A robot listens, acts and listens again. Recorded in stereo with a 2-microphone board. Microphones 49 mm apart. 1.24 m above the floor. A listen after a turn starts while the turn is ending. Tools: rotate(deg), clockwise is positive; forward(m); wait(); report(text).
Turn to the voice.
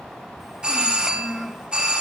rotate(30)
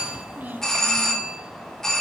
rotate(140)
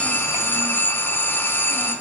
wait()
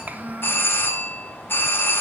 rotate(35)
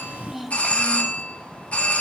report("Found it: a child speaking, straight ahead, under 1 m away.")